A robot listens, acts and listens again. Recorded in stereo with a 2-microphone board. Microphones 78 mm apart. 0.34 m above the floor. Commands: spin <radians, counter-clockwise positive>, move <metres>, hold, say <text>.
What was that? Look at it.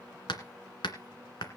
spin 1.57
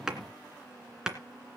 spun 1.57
spin -0.17
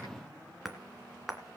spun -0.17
say Found it: hammering, straight ahead, 2 to 4 m away.